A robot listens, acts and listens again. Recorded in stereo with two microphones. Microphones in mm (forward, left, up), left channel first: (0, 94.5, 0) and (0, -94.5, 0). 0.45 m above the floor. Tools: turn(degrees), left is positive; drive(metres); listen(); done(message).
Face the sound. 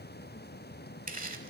listen()
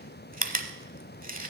turn(degrees=-45)
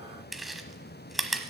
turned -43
done("Facing the chewing, 1 to 2 m away.")